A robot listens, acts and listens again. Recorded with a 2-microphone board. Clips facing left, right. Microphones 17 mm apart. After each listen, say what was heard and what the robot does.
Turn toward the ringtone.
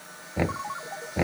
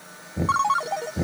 The ringtone: about 65° right or 115° right. Turn 65° right.
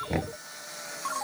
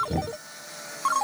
So it is at 40° right. Turn 40° right.
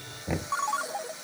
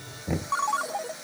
The ringtone is now 10° right. Turn 10° right.
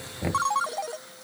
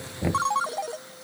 Found it: a ringtone, straight ahead.